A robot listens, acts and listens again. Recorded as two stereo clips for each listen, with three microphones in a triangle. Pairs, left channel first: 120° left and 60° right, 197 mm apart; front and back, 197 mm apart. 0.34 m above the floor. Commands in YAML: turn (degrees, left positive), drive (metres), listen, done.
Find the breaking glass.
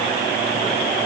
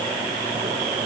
listen: true
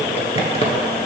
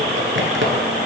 listen: true
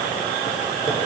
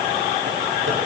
done: "I can't make out breaking glass to turn to."